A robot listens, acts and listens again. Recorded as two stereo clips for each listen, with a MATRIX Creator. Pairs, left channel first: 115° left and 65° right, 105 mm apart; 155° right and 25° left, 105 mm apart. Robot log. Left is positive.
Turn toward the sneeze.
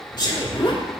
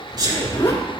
note: The sneeze: 70° left.
cmd yaw +70
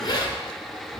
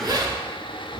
end: Facing where the sneeze came from. I can't hear it now.